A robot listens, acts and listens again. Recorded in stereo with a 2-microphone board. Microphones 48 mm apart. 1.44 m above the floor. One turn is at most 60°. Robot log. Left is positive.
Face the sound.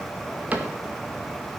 note: The cupboard door: about 35° right or 145° right.
cmd yaw -35
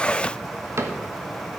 note: So it is at 115° right.
cmd yaw -60
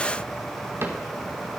note: The cupboard door is now 55° right.
cmd yaw -55
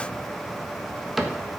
end: Found it: a cupboard door, straight ahead, 1 to 2 m away.